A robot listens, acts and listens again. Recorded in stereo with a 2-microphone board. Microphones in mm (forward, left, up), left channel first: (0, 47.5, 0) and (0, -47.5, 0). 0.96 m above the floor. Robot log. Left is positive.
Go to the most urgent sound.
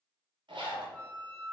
cmd idle
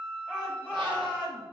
cmd yaw -30
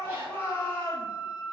note: So it is at 20° left.
cmd yaw +20
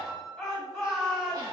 cmd fwd 1.0
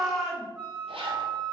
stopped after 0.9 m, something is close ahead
end: Arrived at the shout, straight ahead.